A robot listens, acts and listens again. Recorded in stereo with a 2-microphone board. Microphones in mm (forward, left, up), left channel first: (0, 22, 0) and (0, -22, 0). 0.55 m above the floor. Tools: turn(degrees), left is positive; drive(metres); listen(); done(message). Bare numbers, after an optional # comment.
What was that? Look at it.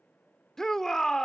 turn(30)
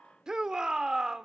# So it is at 15° right.
turn(-15)
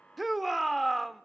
done("Facing the shout.")